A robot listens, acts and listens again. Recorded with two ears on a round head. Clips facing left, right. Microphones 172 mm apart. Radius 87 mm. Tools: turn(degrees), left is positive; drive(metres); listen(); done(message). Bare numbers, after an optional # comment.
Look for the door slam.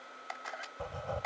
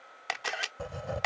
listen()
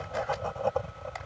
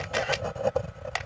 listen()
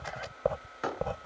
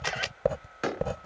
# The door slam: about 25° right or 155° right.
turn(-25)
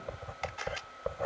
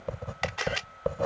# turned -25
listen()
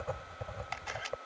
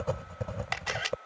done("I heard a door slam, but can't make it out now. It was about straight ahead or 130° right.")